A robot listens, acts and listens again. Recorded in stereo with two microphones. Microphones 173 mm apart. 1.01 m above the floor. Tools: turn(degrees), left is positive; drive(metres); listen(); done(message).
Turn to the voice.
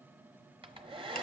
listen()
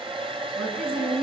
turn(degrees=-60)
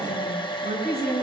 turn(degrees=-65)
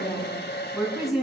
done("Facing the woman speaking, over 4 m away.")